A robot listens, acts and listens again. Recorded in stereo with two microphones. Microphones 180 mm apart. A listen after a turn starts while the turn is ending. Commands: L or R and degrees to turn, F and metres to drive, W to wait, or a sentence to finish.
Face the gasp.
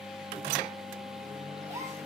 R15
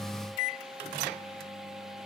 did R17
W
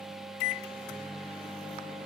I heard a gasp, but can't make it out now. It was about straight ahead or 145° right.